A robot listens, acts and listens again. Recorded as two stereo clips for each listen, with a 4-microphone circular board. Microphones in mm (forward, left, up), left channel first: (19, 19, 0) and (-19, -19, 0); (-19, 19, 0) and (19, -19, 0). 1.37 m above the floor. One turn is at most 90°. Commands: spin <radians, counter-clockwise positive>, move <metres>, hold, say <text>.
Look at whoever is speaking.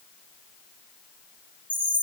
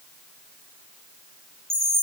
hold
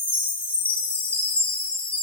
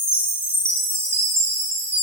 hold
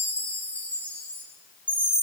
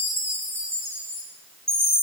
say I can't make out anyone speaking to turn to.